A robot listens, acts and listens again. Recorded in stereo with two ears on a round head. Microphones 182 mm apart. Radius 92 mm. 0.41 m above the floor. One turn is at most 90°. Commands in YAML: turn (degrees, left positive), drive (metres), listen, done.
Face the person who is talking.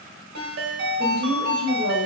turn: 50
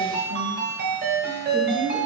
turn: 65
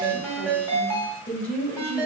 turn: 10
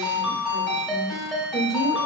done: "Found it: a woman speaking, straight ahead."